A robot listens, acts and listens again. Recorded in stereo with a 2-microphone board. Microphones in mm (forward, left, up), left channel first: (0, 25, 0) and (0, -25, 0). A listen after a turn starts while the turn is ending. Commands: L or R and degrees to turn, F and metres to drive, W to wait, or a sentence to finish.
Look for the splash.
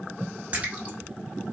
R25
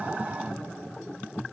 W
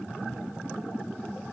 I heard a splash, but can't make it out now. It was about straight ahead or 130° right.